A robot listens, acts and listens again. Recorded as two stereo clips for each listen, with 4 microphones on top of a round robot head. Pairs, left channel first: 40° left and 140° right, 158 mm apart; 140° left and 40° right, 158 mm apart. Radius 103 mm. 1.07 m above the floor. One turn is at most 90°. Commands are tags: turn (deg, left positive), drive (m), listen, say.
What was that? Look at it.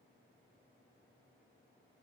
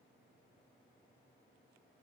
<listen/>
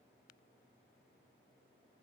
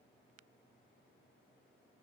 <listen/>
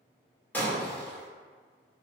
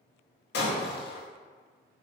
<turn deg="90"/>
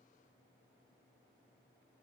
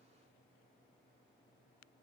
<turn deg="30"/>
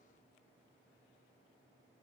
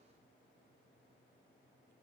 <say>Facing where the breaking glass came from. I can't hear it now.</say>